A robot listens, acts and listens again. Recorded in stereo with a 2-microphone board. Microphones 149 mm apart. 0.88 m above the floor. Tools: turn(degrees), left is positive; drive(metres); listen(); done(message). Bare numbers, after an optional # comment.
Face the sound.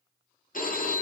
# The phone ringing: about 65° left or 115° left.
turn(65)
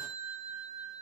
done("Facing the phone ringing.")